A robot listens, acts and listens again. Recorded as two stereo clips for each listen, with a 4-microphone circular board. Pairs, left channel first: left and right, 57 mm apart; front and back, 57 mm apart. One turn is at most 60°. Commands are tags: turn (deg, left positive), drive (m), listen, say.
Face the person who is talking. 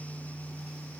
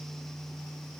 <listen/>
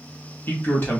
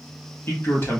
<turn deg="45"/>
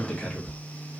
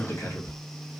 <turn deg="20"/>
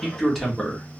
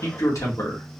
<say>Found it: a man speaking, straight ahead.</say>